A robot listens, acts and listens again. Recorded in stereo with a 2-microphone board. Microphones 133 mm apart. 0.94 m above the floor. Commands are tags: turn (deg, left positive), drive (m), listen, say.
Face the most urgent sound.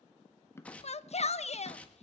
<turn deg="55"/>
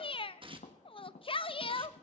<turn deg="50"/>
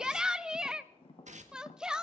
<say>Facing the shout, under 1 m away.</say>